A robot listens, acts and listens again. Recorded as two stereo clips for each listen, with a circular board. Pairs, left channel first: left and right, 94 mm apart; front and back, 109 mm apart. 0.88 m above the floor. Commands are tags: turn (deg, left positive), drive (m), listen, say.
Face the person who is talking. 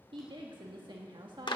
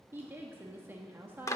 <turn deg="-110"/>
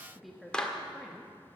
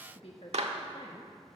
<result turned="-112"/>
<say>Found it: a woman speaking, straight ahead.</say>